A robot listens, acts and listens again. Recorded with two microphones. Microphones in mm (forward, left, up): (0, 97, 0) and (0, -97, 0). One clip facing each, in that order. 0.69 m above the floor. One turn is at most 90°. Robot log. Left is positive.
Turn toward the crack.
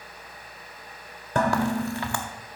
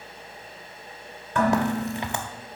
note: The crack: about 20° right or 160° right.
cmd yaw -20
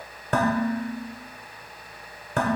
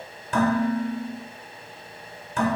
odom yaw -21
cmd idle
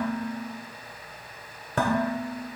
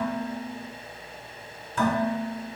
end: I heard a crack, but can't make it out now. It was about straight ahead or 140° right.